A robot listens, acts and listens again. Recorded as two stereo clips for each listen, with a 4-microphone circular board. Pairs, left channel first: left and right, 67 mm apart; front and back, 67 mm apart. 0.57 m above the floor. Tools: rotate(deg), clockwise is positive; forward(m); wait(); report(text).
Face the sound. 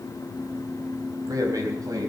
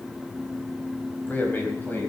rotate(60)
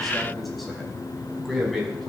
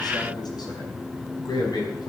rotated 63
report("Found it: a man speaking, straight ahead.")